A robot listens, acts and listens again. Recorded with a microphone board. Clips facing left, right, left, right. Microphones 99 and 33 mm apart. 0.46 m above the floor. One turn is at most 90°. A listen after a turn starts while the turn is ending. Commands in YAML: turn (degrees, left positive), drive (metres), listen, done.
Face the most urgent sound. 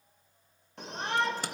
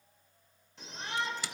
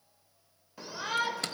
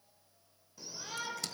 turn: 55
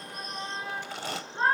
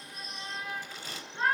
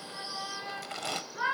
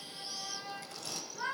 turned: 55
turn: 40
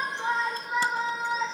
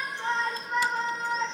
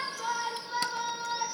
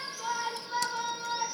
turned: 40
done: "Found it: a shout, straight ahead."